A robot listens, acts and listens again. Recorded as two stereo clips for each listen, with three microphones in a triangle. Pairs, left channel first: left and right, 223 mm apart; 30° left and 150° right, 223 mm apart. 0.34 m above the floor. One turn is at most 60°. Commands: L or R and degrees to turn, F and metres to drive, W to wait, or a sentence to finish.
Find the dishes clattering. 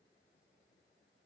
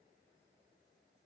W
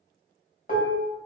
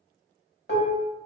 L50
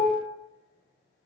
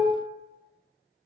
L10
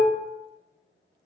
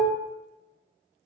Found it: dishes clattering, straight ahead.